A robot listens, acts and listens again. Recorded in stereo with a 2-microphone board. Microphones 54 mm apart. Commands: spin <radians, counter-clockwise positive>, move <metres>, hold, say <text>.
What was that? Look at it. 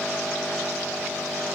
hold
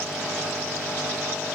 hold
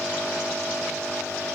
say I can't make out anything to turn to.